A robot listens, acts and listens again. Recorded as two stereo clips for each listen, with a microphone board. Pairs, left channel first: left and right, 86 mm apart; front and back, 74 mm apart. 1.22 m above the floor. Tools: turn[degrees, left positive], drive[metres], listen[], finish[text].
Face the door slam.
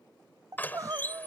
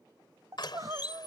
Thought: The door slam: 20° left.
Action: turn[20]
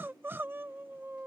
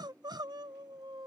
Action: finish[I heard a door slam from this way, but can't make it out now.]